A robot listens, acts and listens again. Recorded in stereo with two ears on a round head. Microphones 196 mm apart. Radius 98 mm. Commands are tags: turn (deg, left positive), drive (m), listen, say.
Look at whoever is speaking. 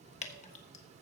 <listen/>
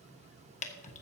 <listen/>
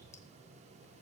<say>I can't make out anyone speaking, only dripping and keys jangling.</say>